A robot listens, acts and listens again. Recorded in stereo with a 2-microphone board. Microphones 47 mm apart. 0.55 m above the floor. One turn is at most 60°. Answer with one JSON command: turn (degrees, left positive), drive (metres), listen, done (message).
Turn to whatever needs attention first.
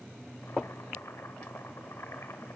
{"listen": true}
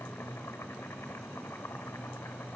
{"listen": true}
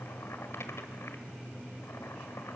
{"done": "I can't make out anything urgent to turn to."}